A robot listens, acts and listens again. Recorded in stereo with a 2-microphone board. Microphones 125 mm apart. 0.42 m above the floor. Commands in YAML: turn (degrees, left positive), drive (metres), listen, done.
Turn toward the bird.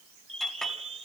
turn: -50
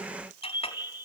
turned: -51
turn: -20
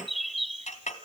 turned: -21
done: "Found it: a bird, straight ahead."